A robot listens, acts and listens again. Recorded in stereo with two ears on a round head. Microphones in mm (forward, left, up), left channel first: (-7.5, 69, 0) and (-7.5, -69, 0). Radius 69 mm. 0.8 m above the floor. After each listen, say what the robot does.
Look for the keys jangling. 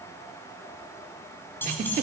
Turn 30° left.
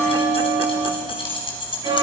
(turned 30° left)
Turn 145° left.
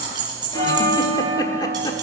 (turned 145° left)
Turn 30° right.
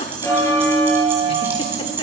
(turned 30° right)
Turn 15° right.
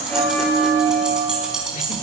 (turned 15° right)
Facing the keys jangling, over 4 m away.